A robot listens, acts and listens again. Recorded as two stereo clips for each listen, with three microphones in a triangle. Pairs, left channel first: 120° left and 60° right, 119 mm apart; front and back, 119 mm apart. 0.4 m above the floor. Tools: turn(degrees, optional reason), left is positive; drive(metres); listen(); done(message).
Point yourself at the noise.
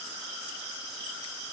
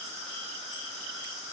listen()
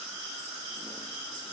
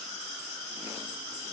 listen()
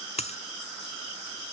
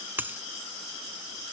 turn(degrees=105, reason="The dropped coin: 105° left.")
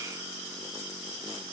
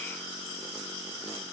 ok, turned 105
done("I heard a dropped coin from this way, but can't make it out now.")